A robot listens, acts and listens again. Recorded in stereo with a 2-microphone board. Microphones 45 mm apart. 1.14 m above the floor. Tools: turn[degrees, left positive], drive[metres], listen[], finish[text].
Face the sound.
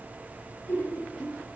Thought: The laughter: about 65° left or 115° left.
Action: turn[65]
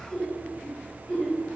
Thought: So it is at 25° left.
Action: turn[25]
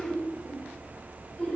Thought: The laughter is now 25° left.
Action: turn[25]
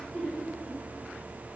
Thought: The laughter is now 10° left.
Action: turn[10]
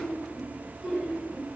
Action: finish[Facing the laughter.]